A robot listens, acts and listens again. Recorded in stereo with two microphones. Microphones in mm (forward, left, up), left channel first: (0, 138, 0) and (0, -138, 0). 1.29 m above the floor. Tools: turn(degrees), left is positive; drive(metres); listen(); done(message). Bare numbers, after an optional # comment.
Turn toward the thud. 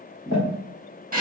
# The thud: about 30° left or 150° left.
turn(30)
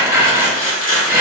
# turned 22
listen()
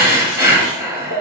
done("I heard a thud, but can't make it out now. It was about 10° left or 130° left.")